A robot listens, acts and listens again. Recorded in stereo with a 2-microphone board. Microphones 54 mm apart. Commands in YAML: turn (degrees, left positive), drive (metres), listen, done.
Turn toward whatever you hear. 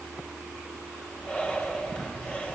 turn: 25
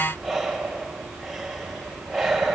done: "Found it: breathing, straight ahead."